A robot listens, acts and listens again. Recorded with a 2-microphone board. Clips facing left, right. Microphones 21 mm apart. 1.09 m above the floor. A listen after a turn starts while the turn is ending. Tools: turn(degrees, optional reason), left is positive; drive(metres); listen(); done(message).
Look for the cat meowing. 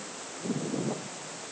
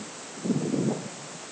listen()
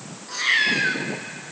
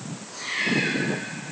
turn(degrees=45, reason="The cat meowing: about 45° left or 135° left.")
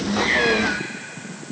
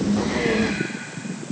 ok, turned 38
listen()
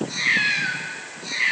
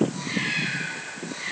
turn(degrees=120, reason="So it is at 120° left.")
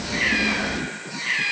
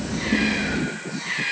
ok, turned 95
turn(degrees=25, reason="The cat meowing is now 25° left.")
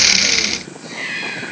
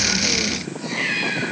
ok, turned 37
turn(degrees=-10, reason="The cat meowing is now 10° right.")
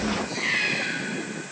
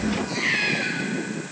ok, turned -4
turn(degrees=-10, reason="The cat meowing is now 10° right.")
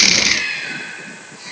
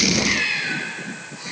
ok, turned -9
done("Facing the cat meowing, over 4 m away.")